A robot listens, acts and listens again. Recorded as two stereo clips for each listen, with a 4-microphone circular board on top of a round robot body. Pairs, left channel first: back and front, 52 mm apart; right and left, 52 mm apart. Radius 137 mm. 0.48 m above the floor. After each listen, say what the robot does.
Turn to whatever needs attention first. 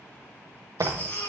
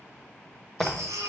Turn 115° left.
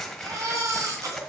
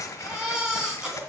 Turn 15° left.
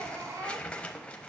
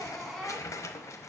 Found it: a baby crying, straight ahead.